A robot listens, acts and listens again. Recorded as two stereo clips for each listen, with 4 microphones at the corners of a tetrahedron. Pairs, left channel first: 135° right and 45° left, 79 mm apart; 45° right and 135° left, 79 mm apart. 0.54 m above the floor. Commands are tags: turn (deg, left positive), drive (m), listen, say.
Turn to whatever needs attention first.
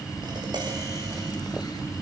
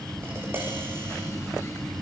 <listen/>
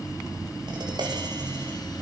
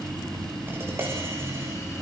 <listen/>
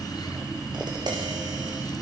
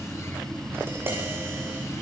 <say>I can't make out anything urgent, only tapping.</say>